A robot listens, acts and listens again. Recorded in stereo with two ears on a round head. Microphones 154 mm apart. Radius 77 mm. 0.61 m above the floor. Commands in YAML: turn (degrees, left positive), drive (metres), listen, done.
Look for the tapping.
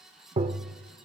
turn: -30
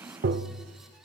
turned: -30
turn: -115
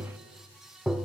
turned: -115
done: "Found it: tapping, straight ahead."